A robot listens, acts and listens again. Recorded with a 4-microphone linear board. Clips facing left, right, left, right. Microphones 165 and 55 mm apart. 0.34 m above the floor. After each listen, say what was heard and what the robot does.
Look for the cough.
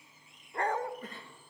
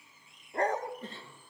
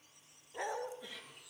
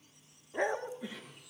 The cough: about 25° right or 155° right. Turn 25° right.
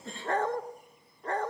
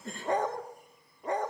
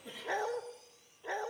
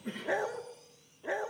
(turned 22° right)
So it is at 130° right. Turn 130° right.
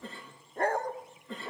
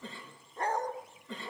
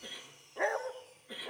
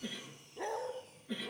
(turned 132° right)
Facing the cough, over 4 m away.